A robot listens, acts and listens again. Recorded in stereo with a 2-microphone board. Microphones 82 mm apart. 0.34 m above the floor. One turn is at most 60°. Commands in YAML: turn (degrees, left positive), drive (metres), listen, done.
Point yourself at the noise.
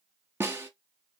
turn: -30
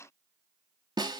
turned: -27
turn: -60
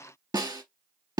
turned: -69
turn: -55
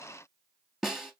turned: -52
done: "Found it: a snare drum, straight ahead, under 1 m away."